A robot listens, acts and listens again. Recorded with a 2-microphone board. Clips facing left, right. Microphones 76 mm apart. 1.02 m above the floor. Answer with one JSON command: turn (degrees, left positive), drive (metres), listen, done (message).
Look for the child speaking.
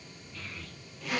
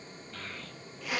{"turn": -90}
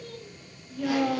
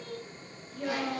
{"turn": 20}
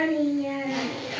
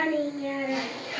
{"done": "Found it: a child speaking, straight ahead, over 4 m away."}